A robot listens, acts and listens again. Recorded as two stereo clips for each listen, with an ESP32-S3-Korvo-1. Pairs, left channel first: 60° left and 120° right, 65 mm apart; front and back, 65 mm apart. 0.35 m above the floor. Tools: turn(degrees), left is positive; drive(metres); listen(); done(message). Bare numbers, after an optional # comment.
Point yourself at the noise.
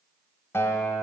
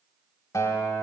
# The guitar: 15° left.
turn(15)
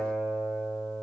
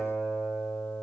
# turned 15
done("Facing the guitar, under 1 m away.")